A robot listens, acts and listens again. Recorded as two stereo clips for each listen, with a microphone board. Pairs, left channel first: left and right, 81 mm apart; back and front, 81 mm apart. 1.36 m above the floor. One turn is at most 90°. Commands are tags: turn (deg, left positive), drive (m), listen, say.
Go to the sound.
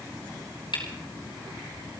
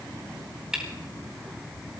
<turn deg="80"/>
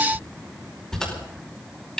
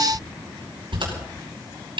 <drive m="1.0"/>
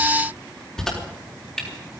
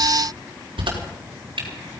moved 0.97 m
<drive m="1.0"/>
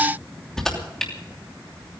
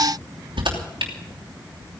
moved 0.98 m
<drive m="1.0"/>
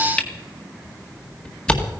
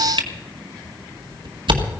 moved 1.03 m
<turn deg="10"/>
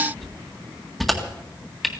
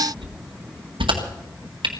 <drive m="1.0"/>
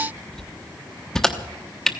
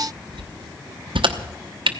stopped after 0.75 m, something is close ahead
<say>I am next to the camera shutter.</say>